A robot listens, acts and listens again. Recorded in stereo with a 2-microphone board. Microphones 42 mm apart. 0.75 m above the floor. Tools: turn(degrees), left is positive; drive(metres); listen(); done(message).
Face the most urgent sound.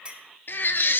turn(degrees=55)
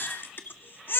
turn(degrees=65)
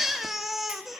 done("Facing the baby crying.")